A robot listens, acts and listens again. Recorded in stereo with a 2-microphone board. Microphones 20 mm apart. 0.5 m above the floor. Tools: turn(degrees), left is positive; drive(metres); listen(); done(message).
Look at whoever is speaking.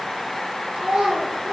turn(degrees=-90)
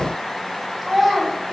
done("Facing the child speaking, over 4 m away.")